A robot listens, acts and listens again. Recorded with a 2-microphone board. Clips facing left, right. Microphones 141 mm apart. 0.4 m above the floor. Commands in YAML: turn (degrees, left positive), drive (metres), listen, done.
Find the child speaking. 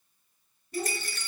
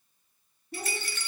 turn: -65
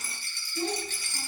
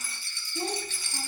turn: -45
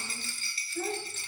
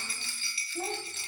turn: -25
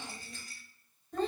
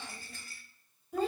turn: -10
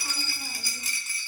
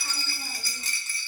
listen: true
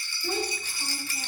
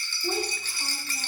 turn: -10
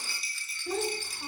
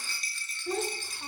done: "Facing the child speaking."